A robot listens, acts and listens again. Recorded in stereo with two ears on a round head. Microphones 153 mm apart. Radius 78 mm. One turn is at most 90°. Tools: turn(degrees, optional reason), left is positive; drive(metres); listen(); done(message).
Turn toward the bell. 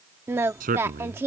listen()
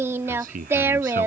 listen()
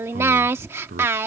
done("I can't make out a bell, only singing and a man speaking.")